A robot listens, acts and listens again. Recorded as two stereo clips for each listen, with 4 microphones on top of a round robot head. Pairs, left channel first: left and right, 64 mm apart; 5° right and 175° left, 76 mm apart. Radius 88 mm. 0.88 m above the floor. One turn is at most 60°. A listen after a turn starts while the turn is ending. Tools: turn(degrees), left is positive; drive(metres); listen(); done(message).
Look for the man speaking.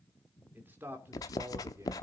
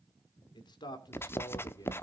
turn(degrees=-40)
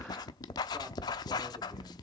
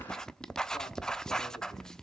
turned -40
listen()
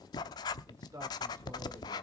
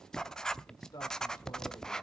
turn(degrees=-50)
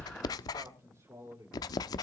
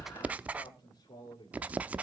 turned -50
turn(degrees=-40)
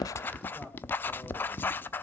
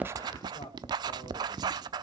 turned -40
done("Found it: a man speaking, straight ahead.")